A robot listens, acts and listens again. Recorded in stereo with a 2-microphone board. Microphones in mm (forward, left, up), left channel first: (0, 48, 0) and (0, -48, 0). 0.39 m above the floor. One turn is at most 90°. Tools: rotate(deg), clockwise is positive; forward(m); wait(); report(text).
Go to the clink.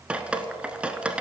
wait()
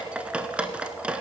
wait()
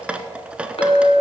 rotate(-75)
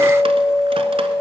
forward(1.0)
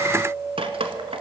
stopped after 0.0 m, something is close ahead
rotate(-10)
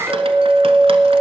report("Something is in my way. I am facing the clink but have not reached it.")